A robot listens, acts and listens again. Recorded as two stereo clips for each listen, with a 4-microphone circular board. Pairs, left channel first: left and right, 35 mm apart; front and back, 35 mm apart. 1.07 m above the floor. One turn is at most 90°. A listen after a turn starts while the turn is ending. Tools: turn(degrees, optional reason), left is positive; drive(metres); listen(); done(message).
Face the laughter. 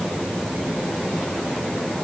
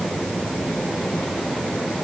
listen()
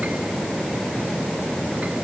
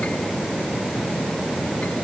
listen()
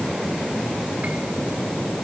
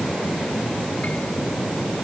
done("I can't make out laughter to turn to.")